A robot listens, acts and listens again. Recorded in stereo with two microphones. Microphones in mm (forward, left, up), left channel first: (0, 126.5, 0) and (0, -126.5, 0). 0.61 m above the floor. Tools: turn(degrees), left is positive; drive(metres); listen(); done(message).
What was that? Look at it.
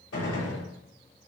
turn(degrees=65)
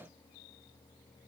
listen()
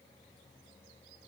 done("I heard a gunshot, but can't make it out now. It was about straight ahead or 50° left.")